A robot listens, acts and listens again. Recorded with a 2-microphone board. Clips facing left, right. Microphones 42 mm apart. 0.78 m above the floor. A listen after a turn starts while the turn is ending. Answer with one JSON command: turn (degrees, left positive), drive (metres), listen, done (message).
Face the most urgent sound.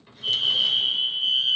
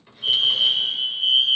{"turn": -55}
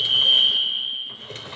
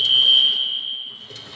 {"turn": -10}
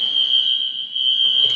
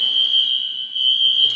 {"done": "Facing the fire alarm."}